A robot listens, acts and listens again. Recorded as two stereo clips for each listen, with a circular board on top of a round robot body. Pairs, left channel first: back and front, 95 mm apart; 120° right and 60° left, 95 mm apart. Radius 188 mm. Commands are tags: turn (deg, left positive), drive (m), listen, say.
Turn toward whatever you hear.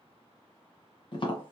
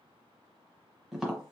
<turn deg="145"/>
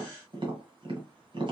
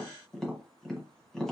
<turn deg="-35"/>
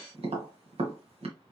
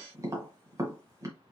<say>Facing the tapping.</say>